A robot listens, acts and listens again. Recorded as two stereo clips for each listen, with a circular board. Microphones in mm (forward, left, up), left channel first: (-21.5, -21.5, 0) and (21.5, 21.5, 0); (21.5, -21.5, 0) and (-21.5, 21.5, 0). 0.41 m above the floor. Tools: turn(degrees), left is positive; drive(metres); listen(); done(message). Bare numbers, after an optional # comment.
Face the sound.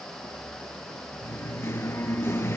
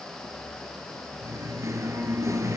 # The singing: 175° left.
turn(175)
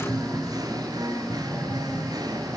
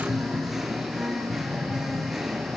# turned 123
# The singing is now 50° left.
turn(50)
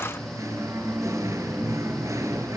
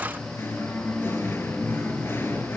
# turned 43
done("Found it: singing, straight ahead.")